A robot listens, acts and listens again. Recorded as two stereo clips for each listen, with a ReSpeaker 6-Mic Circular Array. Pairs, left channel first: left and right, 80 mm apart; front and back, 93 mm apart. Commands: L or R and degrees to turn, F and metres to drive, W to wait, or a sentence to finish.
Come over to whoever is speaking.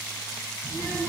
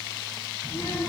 R50
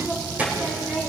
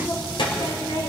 R20
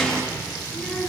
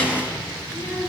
F1.0
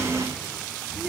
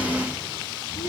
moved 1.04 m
R10
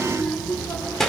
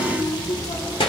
F1.0
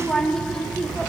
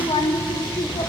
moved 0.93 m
F1.0
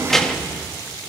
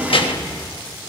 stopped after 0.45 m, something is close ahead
I am next to the child speaking.